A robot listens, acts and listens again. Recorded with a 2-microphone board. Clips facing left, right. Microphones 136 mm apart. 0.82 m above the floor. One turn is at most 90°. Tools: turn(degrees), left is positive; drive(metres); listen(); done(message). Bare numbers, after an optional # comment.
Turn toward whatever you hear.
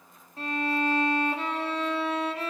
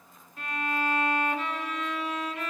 # The violin: about 30° left or 150° left.
turn(30)
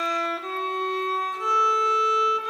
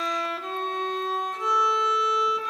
done("Facing the violin, under 1 m away.")